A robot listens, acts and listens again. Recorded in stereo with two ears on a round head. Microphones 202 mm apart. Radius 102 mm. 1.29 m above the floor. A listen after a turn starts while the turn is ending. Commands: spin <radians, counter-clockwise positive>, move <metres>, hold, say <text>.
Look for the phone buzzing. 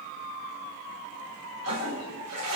hold
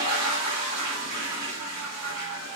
hold
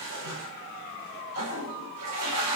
say I can't make out a phone buzzing, only a toilet flushing.